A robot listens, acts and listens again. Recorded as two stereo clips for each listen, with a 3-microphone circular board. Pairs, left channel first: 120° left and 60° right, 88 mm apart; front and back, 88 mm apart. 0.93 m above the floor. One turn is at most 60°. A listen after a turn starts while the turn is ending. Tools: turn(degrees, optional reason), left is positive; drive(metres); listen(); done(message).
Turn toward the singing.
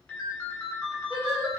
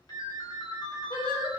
turn(degrees=-10, reason="The singing: 10° right.")
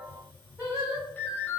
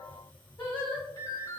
done("Found it: singing, straight ahead, 1 to 2 m away.")